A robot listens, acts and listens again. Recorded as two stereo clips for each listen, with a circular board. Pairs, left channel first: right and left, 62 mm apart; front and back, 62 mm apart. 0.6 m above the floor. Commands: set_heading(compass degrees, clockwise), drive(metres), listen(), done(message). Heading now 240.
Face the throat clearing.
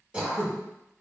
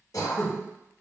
set_heading(220)
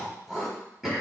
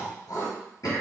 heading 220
set_heading(210)
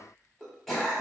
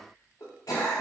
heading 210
done("Facing the throat clearing, under 1 m away.")